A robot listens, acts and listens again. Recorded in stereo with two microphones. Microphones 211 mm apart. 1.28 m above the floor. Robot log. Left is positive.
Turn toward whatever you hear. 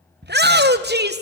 note: The shout: about 50° right or 130° right.
cmd yaw -50
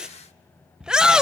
end: Facing the shout, under 1 m away.